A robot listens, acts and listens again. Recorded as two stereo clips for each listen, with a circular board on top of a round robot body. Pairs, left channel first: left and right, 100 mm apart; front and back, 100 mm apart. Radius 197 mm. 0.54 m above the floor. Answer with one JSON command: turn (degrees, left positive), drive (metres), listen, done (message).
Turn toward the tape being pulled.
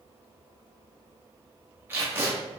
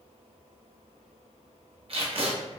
{"turn": -155}
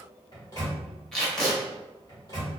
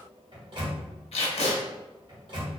{"done": "Found it: tape being pulled, straight ahead, under 1 m away."}